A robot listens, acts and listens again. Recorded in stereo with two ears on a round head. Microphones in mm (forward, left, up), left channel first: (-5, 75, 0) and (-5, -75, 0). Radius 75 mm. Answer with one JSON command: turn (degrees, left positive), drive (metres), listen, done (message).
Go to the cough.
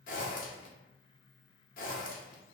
{"listen": true}
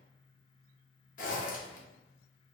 {"listen": true}
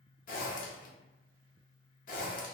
{"done": "I can't make out a cough to turn to."}